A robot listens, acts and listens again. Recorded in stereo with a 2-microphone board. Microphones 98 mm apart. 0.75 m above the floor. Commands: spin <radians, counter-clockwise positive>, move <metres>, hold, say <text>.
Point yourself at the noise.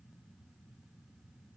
hold
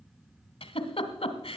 spin 1.57
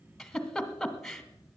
say Found it: a giggle, straight ahead.